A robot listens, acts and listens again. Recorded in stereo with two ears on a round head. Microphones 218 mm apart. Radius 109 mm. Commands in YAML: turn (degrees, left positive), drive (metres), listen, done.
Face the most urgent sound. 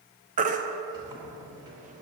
turn: -30
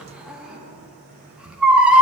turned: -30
done: "Facing the baby crying."